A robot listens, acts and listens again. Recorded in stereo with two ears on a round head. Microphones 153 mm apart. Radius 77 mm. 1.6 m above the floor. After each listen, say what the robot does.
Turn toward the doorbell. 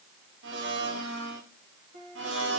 Keep listening.
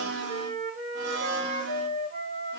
Keep listening.
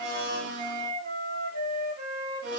I can't make out a doorbell, only a blender and a flute.